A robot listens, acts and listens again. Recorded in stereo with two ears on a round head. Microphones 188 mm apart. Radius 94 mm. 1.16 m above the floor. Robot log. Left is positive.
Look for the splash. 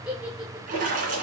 note: The splash: about 40° right or 140° right.
cmd yaw -40
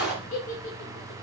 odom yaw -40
end: Facing the splash.